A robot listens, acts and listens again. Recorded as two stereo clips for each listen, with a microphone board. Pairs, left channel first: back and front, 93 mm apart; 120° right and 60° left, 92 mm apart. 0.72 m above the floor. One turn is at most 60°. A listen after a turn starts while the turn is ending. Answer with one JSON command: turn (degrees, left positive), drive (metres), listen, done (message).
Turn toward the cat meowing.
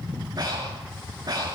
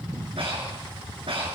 {"listen": true}
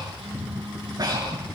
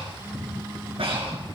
{"listen": true}
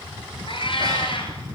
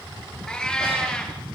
{"turn": 60}
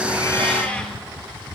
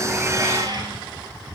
{"turn": 60}
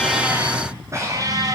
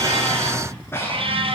{"turn": 50}
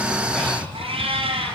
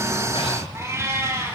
{"done": "Facing the cat meowing."}